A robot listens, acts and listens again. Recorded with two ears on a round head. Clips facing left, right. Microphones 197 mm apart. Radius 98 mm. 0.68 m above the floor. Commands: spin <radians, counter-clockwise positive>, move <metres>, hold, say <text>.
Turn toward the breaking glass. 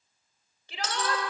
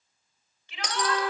spin -0.52
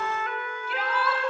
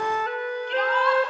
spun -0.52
hold
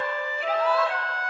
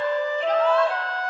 say I heard breaking glass, but can't make it out now. It was about 15° left or 135° right.